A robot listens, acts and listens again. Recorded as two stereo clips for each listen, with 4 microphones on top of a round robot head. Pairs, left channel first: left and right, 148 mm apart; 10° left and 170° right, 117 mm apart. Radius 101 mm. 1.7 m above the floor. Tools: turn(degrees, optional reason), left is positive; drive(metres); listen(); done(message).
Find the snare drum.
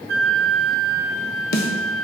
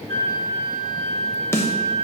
turn(degrees=80, reason="The snare drum: 80° left.")
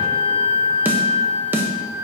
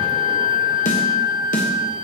turn(degrees=-15, reason="The snare drum is now 15° right.")
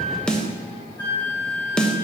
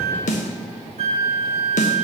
done("Found it: a snare drum, straight ahead, 1 to 2 m away.")